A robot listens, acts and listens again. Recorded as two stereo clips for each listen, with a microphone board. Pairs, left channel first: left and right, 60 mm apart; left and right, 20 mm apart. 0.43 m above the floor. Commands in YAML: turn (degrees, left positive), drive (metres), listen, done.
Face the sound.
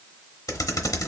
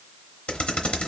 turn: 90
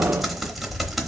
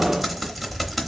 done: "Facing the typing on a keyboard."